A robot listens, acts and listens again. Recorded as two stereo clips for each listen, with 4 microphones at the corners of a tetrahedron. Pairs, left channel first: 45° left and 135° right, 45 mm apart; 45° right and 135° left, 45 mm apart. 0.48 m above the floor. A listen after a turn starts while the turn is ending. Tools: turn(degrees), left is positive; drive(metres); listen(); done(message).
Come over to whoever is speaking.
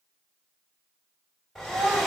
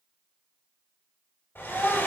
turn(degrees=-95)
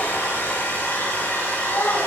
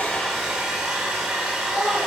drive(metres=1.0)
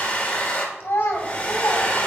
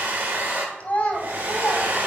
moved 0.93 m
turn(degrees=15)
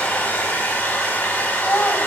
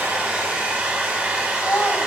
drive(metres=1.0)
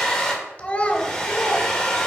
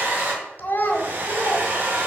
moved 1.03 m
turn(degrees=-10)
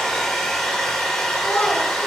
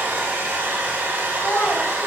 drive(metres=1.0)
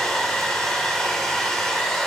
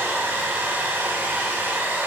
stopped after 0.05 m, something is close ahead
listen()
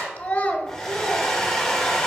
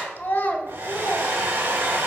done("I am next to the child speaking.")